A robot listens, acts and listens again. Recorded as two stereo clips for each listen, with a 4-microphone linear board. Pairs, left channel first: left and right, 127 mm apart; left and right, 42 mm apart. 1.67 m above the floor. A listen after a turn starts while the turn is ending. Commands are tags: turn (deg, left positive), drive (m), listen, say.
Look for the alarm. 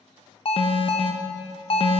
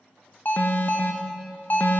<turn deg="45"/>
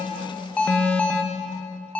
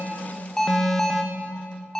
<turn deg="10"/>
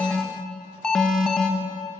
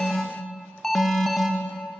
<say>Found it: an alarm, straight ahead.</say>